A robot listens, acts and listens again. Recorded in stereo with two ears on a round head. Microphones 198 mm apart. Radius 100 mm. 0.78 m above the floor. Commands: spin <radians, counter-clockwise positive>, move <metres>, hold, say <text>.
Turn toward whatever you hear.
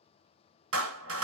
spin -1.22
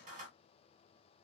spin -0.61
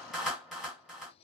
say Found it: a clap, straight ahead, 1 to 2 m away.